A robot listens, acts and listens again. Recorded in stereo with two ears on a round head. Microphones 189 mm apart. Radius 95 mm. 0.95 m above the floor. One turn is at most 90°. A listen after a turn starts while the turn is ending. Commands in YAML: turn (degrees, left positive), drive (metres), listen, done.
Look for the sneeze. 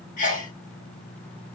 turn: 40
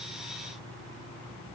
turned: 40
listen: true
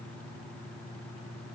done: "I heard a sneeze, but can't make it out now. It was about straight ahead or 100° left."